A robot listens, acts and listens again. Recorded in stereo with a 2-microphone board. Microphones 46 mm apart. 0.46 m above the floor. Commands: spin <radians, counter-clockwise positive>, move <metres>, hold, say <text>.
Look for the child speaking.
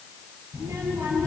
spin -1.57
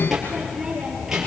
spin -0.17
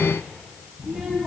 say Found it: a child speaking, straight ahead, over 4 m away.